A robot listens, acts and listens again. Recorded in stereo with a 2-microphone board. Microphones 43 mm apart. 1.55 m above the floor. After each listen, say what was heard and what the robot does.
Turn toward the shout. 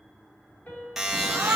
The shout: about 70° right or 110° right. Turn 70° right.
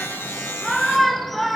Facing the shout.